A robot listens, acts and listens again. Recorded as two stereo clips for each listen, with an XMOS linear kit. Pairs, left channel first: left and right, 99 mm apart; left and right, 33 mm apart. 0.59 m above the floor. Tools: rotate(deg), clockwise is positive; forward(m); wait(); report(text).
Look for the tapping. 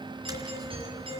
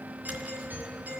rotate(45)
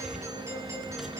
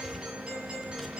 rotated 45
report("Found it: tapping, straight ahead.")